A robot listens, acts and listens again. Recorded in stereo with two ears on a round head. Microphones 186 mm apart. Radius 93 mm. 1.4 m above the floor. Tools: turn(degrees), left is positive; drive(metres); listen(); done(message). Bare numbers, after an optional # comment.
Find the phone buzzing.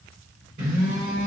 # The phone buzzing: about 35° right or 145° right.
turn(-35)
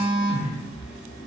done("Found it: a phone buzzing, straight ahead, 1 to 2 m away.")